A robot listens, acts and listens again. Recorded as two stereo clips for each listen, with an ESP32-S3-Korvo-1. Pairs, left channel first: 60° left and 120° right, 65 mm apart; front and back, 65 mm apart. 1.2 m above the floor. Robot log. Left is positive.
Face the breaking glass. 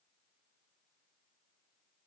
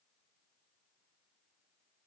cmd idle
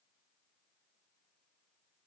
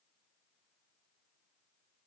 cmd idle
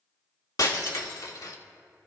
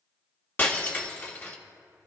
note: The breaking glass: 55° left.
cmd yaw +55
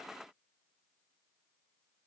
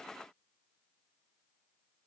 end: Facing where the breaking glass came from. I can't hear it now.